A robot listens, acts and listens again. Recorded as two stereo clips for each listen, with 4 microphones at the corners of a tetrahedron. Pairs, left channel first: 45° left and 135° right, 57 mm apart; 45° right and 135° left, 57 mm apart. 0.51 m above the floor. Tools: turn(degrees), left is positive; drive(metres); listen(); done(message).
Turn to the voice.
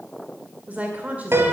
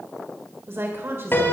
turn(degrees=170)
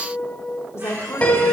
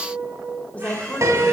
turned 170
turn(degrees=15)
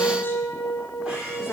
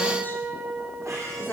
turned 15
listen()
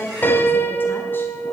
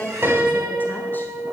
done("Found it: a woman speaking, straight ahead, 1 to 2 m away.")